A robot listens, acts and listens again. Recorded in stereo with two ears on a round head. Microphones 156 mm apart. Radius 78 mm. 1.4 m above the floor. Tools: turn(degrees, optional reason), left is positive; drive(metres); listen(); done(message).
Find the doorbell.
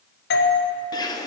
turn(degrees=60, reason="The doorbell: about 60° left or 120° left.")
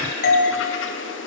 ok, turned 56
turn(degrees=55, reason="So it is at 55° left.")
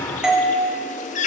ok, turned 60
done("Facing the doorbell, 1 to 2 m away.")